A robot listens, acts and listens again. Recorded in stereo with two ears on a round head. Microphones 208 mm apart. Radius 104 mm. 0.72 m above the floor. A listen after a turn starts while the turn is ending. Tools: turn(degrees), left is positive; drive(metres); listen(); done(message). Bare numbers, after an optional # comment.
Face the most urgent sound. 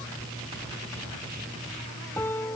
listen()
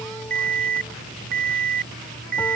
# The alarm: about 40° right or 140° right.
turn(-40)
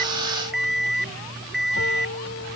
done("Found it: an alarm, straight ahead.")